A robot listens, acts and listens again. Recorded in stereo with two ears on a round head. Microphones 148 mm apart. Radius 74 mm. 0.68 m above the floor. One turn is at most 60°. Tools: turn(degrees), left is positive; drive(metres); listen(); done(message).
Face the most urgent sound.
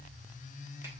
listen()
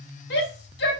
turn(degrees=60)
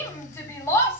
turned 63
turn(degrees=20)
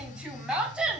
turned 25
done("Found it: a shout, straight ahead.")